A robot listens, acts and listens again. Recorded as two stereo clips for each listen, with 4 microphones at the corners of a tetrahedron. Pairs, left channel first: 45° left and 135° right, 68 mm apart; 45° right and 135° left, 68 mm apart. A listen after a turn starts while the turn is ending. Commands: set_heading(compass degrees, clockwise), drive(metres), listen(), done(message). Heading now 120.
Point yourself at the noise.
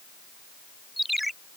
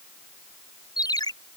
set_heading(165)
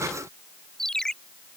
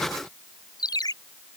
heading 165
set_heading(200)
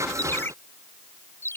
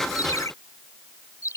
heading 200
set_heading(210)
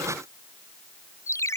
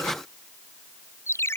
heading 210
done("Facing the ringtone.")